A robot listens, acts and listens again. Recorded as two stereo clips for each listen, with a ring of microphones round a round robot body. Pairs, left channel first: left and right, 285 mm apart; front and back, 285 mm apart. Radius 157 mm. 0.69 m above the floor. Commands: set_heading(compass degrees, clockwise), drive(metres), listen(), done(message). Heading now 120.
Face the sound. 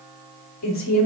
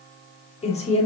set_heading(50)
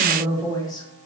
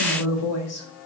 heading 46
set_heading(31)
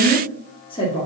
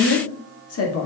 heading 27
set_heading(2)
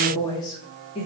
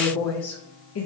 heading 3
set_heading(343)
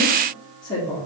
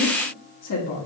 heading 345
set_heading(330)
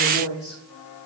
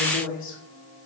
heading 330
done("Found it: a woman speaking, straight ahead.")